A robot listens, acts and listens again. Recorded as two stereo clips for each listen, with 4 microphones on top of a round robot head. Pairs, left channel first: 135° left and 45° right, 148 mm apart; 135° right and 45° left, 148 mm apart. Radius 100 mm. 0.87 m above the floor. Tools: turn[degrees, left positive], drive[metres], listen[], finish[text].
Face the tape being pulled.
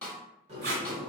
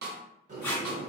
Thought: The tape being pulled: 50° right.
Action: turn[-50]
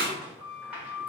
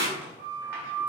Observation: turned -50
Thought: The tape being pulled is now 20° right.
Action: turn[-20]
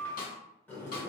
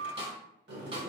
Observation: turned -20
Action: listen[]
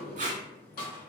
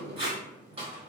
Action: finish[Found it: tape being pulled, straight ahead.]